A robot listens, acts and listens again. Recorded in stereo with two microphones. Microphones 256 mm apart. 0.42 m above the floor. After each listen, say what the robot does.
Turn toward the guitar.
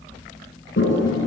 Keep listening.
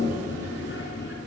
Keep listening.
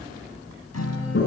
Turn 75° left.
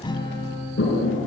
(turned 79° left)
Turn 20° left.
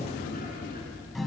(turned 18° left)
Facing the guitar, 2 to 4 m away.